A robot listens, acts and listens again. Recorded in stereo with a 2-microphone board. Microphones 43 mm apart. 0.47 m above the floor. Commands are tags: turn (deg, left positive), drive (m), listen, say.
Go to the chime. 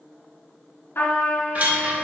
<turn deg="-40"/>
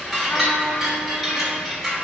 <drive m="1.0"/>
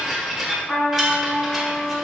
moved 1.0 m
<turn deg="-10"/>
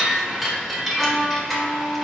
<drive m="1.0"/>
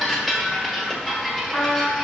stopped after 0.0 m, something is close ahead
<say>Arrived at the chime, straight ahead.</say>